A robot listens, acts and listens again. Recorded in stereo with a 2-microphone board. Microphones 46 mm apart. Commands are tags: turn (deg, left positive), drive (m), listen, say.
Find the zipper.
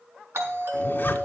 <turn deg="45"/>
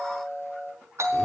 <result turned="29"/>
<listen/>
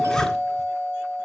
<turn deg="15"/>
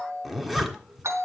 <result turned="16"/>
<say>Found it: a zipper, straight ahead, 1 to 2 m away.</say>